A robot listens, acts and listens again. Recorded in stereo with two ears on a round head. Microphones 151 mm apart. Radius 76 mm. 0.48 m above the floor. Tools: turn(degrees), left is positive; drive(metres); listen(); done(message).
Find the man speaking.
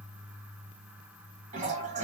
listen()
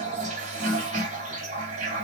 listen()
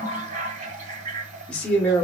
turn(degrees=30)
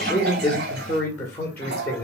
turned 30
turn(degrees=30)
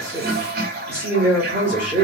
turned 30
turn(degrees=-15)
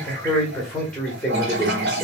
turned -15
done("Facing the man speaking.")